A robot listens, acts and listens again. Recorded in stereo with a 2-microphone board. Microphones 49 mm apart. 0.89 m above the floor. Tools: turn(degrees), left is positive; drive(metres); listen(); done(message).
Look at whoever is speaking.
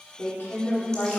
turn(degrees=40)
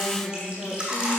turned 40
turn(degrees=100)
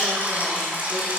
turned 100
listen()
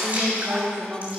turn(degrees=-20)
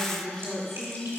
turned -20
done("Facing the woman speaking.")